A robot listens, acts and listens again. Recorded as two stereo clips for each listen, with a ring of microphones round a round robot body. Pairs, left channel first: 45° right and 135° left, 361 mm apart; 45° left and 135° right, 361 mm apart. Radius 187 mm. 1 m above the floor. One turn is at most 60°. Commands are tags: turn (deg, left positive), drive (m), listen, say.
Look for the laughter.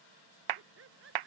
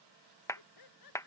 <turn deg="60"/>
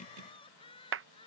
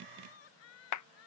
<turn deg="30"/>
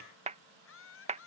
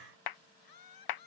<turn deg="10"/>
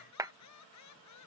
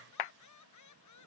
<say>Facing the laughter.</say>